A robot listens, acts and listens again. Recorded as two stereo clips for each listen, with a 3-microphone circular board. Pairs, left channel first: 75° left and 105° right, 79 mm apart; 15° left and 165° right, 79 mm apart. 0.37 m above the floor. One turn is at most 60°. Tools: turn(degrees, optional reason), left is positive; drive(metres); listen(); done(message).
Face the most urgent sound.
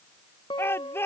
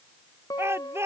turn(degrees=60, reason="The shout: 135° left.")
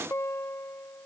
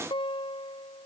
turn(degrees=60, reason="Nothing new. It was at 75° left.")
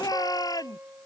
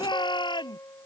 turn(degrees=35, reason="The shout is now 35° left.")
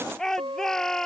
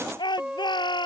turn(degrees=-10, reason="The shout is now 10° right.")
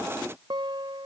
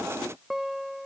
listen()
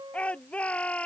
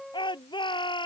done("Found it: a shout, straight ahead.")